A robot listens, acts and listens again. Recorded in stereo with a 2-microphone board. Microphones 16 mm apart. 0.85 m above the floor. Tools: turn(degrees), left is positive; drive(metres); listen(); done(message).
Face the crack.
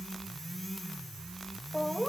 listen()
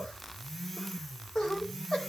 listen()
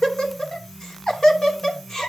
done("I can't make out a crack to turn to.")